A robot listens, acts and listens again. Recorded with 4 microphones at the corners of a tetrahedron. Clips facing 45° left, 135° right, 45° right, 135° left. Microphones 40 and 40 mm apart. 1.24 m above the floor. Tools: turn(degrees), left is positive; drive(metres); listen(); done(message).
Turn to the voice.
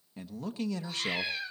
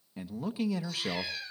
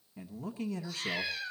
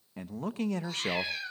turn(degrees=145)
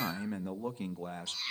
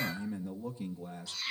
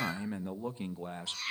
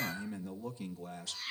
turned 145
turn(degrees=10)
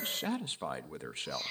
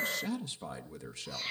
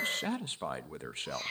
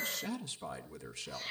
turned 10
done("Facing the man speaking, 1 to 2 m away.")